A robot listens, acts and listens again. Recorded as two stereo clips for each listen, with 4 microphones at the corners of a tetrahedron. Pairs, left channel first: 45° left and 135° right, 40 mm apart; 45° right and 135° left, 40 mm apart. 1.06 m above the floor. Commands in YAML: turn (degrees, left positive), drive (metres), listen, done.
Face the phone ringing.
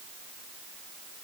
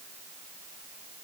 listen: true
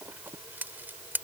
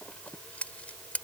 listen: true
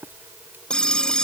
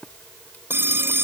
turn: 115
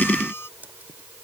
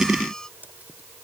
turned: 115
listen: true
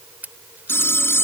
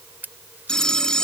turn: 30
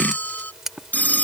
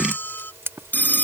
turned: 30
done: "Found it: a phone ringing, straight ahead."